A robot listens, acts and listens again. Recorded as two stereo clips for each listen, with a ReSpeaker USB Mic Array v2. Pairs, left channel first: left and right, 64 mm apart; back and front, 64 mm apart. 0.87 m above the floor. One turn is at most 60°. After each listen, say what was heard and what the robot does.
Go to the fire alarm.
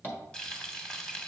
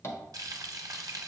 Keep listening.
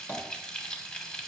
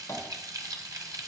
Keep listening.
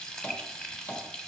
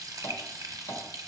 I can't make out a fire alarm, only frying and tapping.